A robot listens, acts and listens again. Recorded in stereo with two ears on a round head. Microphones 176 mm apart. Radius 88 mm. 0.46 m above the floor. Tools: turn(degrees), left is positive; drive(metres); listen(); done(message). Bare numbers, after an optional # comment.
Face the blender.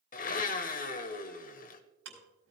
# The blender: about 45° left or 135° left.
turn(45)
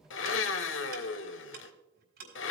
# So it is at 85° left.
turn(85)
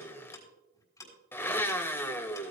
# The blender is now 10° left.
turn(10)
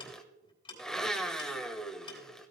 done("Facing the blender, 1 to 2 m away.")